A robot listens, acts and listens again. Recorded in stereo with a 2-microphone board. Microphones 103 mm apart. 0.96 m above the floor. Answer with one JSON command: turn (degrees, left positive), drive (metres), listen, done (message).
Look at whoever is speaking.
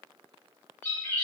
{"listen": true}
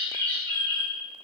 {"listen": true}
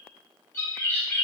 {"done": "I can't make out anyone speaking to turn to."}